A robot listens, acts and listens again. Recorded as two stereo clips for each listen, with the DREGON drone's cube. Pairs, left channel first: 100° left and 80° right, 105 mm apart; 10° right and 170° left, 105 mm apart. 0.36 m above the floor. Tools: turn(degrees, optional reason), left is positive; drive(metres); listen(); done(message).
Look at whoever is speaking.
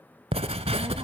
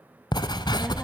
turn(degrees=-110, reason="The child speaking: 110° right.")
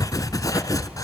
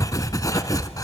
listen()
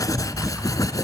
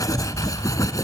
listen()
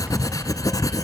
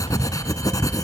done("Facing where the child speaking came from. I can't hear it now.")